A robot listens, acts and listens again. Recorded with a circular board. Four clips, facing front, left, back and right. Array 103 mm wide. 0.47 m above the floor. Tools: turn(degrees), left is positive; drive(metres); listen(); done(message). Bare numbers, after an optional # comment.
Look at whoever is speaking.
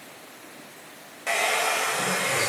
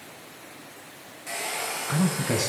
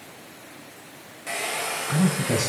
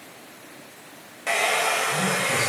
# The man speaking: 130° left.
turn(130)
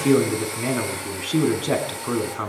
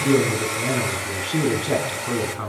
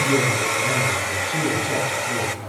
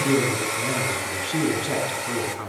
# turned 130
# The man speaking is now 15° left.
turn(15)
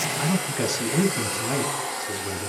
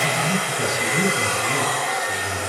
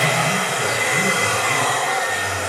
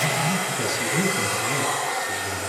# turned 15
done("Facing the man speaking, over 4 m away.")